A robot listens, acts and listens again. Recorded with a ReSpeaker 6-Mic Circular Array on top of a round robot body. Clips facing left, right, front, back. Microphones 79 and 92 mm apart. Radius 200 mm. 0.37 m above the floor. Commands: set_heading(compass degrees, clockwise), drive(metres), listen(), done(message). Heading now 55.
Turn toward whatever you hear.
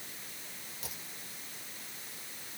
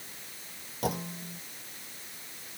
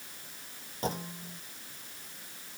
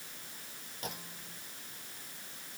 set_heading(110)
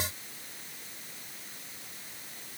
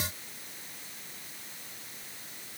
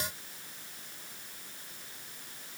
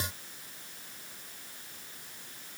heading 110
done("Facing where the clunk came from. I can't hear it now.")